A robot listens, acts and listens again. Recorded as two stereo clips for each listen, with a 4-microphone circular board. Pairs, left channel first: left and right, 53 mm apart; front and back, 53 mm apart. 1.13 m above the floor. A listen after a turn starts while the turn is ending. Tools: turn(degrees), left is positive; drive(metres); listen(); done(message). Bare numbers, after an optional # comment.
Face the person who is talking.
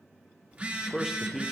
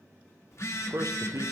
# The man speaking: 175° right.
turn(-175)
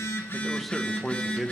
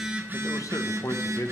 done("Facing the man speaking, under 1 m away.")